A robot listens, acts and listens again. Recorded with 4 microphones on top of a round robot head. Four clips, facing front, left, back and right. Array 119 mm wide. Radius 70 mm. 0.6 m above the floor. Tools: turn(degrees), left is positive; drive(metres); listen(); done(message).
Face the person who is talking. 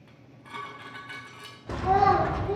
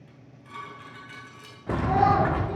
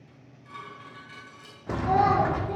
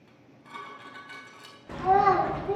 turn(degrees=-65)
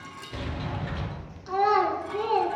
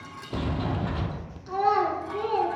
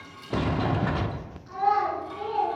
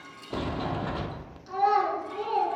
turn(degrees=15)
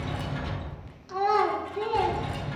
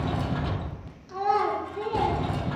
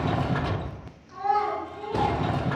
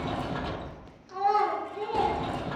done("Facing the child speaking.")